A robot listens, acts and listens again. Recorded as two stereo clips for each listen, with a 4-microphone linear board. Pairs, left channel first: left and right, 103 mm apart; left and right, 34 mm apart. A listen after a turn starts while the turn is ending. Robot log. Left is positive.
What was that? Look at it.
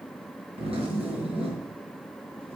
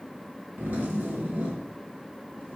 note: The zipper: about 65° right or 115° right.
cmd yaw -65
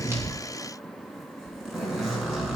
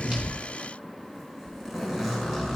end: Found it: a zipper, straight ahead, 2 to 4 m away.